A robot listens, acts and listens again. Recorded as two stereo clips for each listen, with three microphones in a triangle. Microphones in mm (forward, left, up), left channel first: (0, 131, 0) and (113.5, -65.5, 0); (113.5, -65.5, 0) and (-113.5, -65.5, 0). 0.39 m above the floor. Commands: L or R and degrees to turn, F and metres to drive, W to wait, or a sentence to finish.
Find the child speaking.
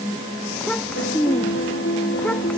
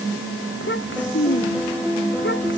L35
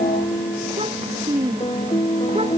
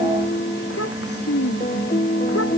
Found it: a child speaking, straight ahead.